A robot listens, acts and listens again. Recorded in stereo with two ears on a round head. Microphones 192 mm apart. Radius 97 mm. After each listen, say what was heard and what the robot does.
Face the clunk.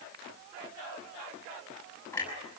Turn 30° left.
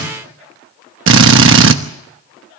Keep listening.
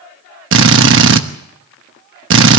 I heard a clunk, but can't make it out now. It was about 20° right or 140° left.